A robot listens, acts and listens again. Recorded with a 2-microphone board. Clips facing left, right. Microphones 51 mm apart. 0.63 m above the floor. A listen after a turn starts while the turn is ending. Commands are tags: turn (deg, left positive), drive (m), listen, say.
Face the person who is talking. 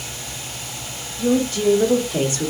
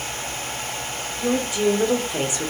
<turn deg="-15"/>
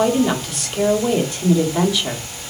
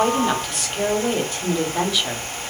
<say>Found it: a woman speaking, straight ahead, 1 to 2 m away.</say>